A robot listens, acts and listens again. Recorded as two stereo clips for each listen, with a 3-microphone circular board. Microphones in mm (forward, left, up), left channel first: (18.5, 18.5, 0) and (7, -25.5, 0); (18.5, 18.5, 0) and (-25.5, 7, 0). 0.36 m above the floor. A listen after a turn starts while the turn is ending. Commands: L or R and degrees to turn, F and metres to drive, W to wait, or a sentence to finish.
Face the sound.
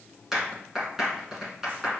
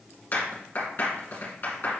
R25
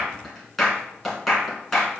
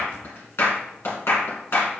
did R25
R10
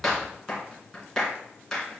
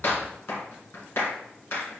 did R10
Facing the clap.